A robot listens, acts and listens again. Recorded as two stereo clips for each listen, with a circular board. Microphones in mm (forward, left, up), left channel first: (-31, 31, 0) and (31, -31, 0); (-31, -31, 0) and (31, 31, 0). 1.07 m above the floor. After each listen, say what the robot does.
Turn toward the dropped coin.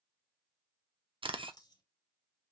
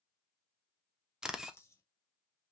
Turn 170° left.
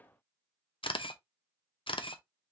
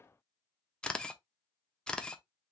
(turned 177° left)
Turn 10° right.
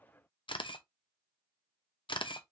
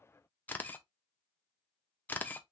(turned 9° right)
I heard a dropped coin from this way, but can't make it out now.